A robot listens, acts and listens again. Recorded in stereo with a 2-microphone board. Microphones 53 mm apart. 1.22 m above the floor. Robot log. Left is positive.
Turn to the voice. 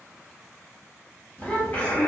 note: The child speaking: about 25° left or 155° left.
cmd yaw +25
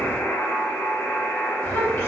note: So it is at 130° left.
cmd yaw +130
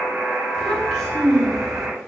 end: Facing the child speaking.